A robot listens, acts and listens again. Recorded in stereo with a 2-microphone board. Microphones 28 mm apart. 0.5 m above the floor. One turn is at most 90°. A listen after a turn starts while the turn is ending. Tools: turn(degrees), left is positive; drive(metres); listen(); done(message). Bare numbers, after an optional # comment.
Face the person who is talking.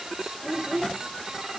turn(30)
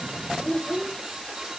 # So it is at 140° left.
turn(90)
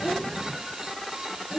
# The child speaking is now 35° left.
turn(35)
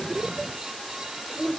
done("Found it: a child speaking, straight ahead, 1 to 2 m away.")